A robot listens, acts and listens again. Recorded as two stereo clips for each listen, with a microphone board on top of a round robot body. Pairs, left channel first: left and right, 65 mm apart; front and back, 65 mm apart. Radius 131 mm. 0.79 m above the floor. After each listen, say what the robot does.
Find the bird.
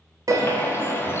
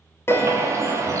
Turn 140° left.
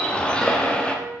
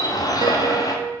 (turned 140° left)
Turn 15° left.
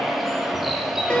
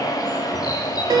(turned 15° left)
Facing the bird, 1 to 2 m away.